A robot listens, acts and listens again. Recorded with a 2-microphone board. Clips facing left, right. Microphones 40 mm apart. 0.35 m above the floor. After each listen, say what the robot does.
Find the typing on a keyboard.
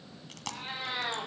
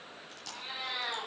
Keep listening.
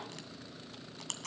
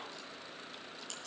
Keep listening.
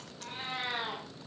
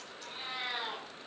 I can't make out typing on a keyboard, only chewing and a cat meowing.